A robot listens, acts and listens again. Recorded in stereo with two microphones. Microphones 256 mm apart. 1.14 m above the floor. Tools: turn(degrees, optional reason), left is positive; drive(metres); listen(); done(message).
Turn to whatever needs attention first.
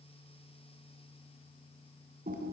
listen()
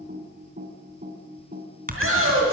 turn(degrees=-60, reason="The shout: about 60° right or 120° right.")
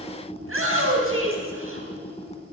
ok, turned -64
turn(degrees=-60, reason="So it is at 60° right.")
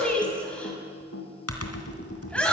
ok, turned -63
done("Facing the shout, over 4 m away.")